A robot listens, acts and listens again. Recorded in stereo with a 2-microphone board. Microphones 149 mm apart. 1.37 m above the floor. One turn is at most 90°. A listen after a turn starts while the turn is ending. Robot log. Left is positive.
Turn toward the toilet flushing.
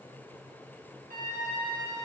cmd idle
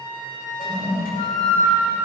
cmd yaw +90
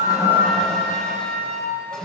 end: Found it: a toilet flushing, straight ahead.